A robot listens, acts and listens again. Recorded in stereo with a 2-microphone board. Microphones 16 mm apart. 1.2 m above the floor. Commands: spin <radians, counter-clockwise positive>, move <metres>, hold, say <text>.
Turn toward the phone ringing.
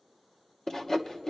hold
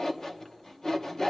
hold
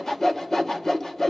say I can't make out a phone ringing to turn to.